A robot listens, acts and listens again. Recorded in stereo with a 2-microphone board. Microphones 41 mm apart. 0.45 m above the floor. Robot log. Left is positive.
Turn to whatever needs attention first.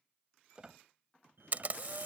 note: The fire alarm: about 65° right or 115° right.
cmd yaw -65
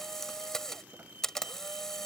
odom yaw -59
note: So it is at 50° right.
cmd yaw -50
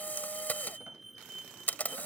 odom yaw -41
note: The fire alarm is now 10° right.
cmd yaw -10
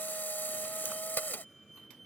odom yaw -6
end: Facing the fire alarm.